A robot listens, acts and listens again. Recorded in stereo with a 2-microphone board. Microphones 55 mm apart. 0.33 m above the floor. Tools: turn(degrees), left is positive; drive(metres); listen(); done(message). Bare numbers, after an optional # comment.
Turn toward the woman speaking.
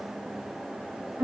listen()
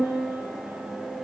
listen()
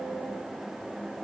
done("I can't make out a woman speaking to turn to.")